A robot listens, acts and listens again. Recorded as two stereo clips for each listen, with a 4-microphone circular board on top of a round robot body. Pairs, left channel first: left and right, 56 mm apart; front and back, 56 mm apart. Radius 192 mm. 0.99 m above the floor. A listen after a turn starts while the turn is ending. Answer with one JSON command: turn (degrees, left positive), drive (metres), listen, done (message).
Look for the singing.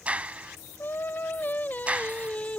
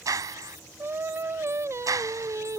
{"turn": 155}
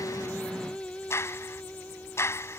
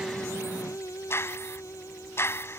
{"turn": 25}
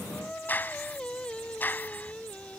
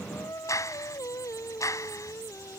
{"turn": 20}
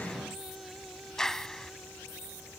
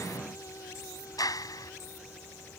{"listen": true}
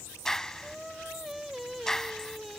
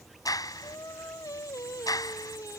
{"done": "Facing the singing."}